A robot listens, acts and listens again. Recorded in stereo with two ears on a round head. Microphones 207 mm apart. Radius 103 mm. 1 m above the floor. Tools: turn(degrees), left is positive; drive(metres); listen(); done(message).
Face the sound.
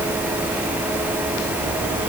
listen()
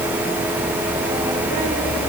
listen()
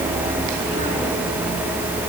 done("I can't make out anything.")